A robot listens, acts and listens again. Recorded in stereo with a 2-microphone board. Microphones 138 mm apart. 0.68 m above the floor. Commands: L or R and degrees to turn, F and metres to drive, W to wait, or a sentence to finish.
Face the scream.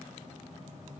W
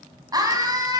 R25
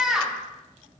Facing the scream.